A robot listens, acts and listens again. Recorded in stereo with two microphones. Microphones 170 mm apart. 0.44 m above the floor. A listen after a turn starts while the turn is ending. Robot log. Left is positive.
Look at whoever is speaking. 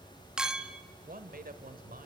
note: The man speaking: about 55° right or 125° right.
cmd yaw -55
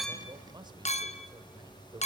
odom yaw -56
note: So it is at 30° right.
cmd yaw -30
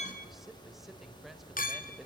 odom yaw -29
end: Facing the man speaking.